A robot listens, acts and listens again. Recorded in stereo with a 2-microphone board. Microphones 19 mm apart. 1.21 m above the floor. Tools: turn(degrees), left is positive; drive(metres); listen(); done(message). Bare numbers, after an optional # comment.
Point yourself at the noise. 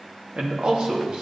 # The man speaking: about 40° right or 140° right.
turn(-40)
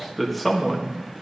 # So it is at 10° left.
turn(10)
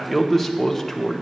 # The man speaking is now 20° left.
turn(20)
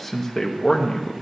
# The man speaking is now 30° left.
turn(30)
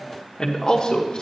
# The man speaking is now 40° left.
turn(40)
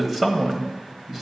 # The man speaking is now 15° right.
turn(-15)
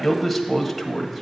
done("Found it: a man speaking, straight ahead.")